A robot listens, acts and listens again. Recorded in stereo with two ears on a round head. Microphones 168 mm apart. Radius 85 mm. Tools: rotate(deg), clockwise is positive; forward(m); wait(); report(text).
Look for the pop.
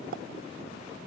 rotate(55)
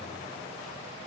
wait()
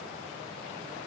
report("I heard a pop, but can't make it out now. It was about straight ahead or 70° right.")